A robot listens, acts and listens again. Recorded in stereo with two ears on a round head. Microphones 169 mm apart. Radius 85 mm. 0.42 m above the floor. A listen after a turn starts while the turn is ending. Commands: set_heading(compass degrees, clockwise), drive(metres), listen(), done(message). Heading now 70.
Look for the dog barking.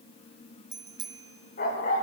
set_heading(25)
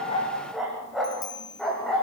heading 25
done("Facing the dog barking, over 4 m away.")